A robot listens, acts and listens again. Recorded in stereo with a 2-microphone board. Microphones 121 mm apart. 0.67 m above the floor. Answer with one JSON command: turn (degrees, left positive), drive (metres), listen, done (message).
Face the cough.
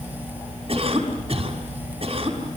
{"turn": -50}
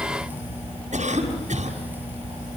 {"turn": -80}
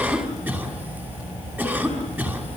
{"turn": -15}
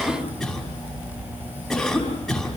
{"done": "Facing the cough, over 4 m away."}